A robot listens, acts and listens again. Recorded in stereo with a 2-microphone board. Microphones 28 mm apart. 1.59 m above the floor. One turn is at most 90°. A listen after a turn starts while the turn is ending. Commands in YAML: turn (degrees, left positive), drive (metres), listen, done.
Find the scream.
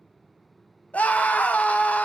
turn: 70
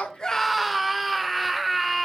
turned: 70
done: "Facing the scream, 1 to 2 m away."